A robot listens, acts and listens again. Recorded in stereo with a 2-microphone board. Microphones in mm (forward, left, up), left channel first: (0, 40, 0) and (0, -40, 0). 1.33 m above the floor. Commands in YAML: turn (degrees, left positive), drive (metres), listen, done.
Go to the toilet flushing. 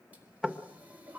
turn: -20
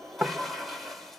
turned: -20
drive: 1.0
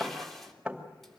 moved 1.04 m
drive: 1.0
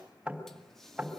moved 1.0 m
listen: true
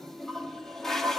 drive: 1.0
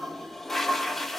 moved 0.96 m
drive: 1.0
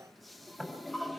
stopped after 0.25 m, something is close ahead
done: "Arrived at the toilet flushing, straight ahead."